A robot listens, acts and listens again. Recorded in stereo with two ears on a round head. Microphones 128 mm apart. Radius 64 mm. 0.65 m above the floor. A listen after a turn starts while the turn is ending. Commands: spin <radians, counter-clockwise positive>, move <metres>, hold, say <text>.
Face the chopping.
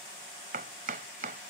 spin -1.05
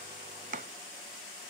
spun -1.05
spin -1.05
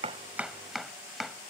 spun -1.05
say Facing the chopping.